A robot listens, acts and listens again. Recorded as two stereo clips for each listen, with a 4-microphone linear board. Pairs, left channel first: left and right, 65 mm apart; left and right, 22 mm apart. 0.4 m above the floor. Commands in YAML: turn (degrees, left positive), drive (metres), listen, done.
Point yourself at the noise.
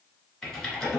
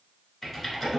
turn: 30
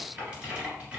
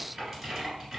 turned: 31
turn: -20
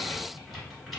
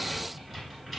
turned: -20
done: "Found it: typing on a keyboard, straight ahead."